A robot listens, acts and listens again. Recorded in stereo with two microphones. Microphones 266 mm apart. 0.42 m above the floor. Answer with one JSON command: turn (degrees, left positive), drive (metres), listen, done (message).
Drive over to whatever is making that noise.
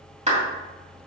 {"turn": -25}
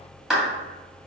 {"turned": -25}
{"drive": 1.0}
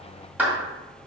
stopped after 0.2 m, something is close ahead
{"done": "Blocked. The clap is further on, straight ahead."}